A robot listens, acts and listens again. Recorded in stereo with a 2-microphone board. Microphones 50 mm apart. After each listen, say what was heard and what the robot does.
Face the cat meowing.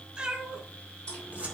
The cat meowing: about 15° right or 165° right. Turn 15° right.
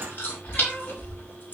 Keep listening.
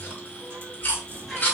Keep listening.
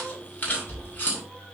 I heard a cat meowing, but can't make it out now. It was about straight ahead or 150° right.